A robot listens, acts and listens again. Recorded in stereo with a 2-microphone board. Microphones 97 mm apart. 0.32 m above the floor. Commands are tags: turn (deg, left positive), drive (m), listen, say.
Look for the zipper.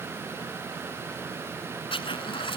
<turn deg="60"/>
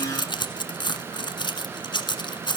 <turn deg="55"/>
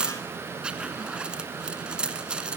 <turn deg="-10"/>
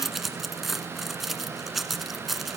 <say>Found it: a zipper, straight ahead, 1 to 2 m away.</say>